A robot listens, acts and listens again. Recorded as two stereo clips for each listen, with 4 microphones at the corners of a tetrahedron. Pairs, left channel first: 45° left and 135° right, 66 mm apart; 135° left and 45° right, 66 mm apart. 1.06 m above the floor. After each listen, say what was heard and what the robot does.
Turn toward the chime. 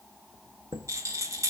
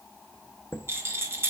The chime: 170° right. Turn 170° right.
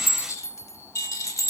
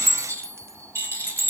Found it: a chime, straight ahead, under 1 m away.